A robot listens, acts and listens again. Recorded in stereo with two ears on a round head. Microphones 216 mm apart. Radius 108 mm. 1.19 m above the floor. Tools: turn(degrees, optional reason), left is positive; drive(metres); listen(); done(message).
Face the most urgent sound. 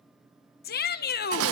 turn(degrees=40, reason="The shout: about 40° left or 140° left.")
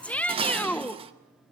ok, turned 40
done("Facing the shout, 1 to 2 m away.")